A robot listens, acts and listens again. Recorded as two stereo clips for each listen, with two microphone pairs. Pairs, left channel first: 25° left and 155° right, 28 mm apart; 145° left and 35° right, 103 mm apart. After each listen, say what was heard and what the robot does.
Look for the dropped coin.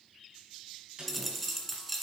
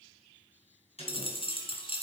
The dropped coin: 115° left. Turn 115° left.
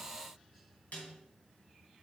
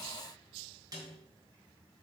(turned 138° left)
Nothing new. It was at 25° right. Turn 25° right.
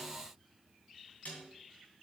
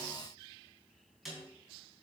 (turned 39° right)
Nothing new. It was at 15° left. Turn 15° left.
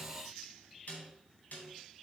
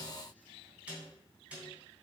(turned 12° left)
Facing where the dropped coin came from. I can't hear it now.